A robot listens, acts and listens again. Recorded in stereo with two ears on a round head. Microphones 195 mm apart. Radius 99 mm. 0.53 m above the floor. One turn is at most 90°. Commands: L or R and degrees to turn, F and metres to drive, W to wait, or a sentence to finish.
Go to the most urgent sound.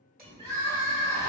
R60
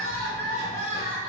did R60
R25
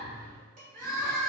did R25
L10
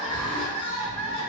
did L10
F1.0
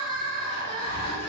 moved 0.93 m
R10
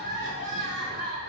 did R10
F1.0
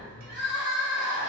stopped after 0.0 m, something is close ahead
Arrived at the crying, straight ahead.